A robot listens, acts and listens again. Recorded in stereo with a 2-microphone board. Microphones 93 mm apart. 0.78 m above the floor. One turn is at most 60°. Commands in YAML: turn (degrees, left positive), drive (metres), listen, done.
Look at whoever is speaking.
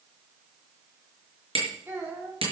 turn: -25
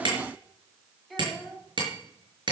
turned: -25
done: "Found it: a child speaking, straight ahead, over 4 m away."